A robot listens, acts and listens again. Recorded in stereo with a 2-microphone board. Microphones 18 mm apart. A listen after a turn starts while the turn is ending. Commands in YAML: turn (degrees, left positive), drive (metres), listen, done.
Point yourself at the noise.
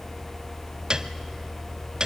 turn: -45
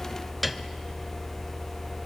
done: "Found it: a piano, straight ahead, under 1 m away."